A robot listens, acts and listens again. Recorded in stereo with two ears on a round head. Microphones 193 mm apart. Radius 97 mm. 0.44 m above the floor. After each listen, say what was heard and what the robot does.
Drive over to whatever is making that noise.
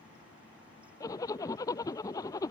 The zipper: about 15° left or 165° left. Turn 15° left.
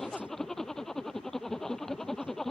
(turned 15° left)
Drive 1.0 m forward.
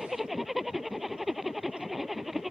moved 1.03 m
Drive 1.0 m forward.
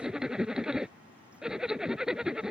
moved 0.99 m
Drive 1.0 m forward.
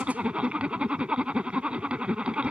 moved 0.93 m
Drive 1.0 m forward.
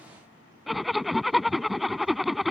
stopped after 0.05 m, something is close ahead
I am next to the zipper.